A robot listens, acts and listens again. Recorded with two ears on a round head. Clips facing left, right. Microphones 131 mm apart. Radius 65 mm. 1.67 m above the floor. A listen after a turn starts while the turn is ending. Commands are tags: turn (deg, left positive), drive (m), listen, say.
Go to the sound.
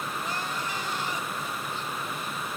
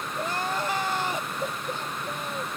<turn deg="-45"/>
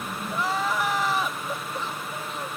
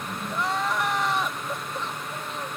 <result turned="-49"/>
<drive m="1.0"/>
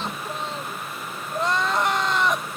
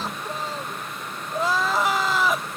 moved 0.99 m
<drive m="1.0"/>
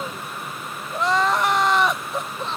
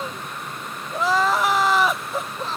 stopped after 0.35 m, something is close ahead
<say>Arrived at the crying, straight ahead.</say>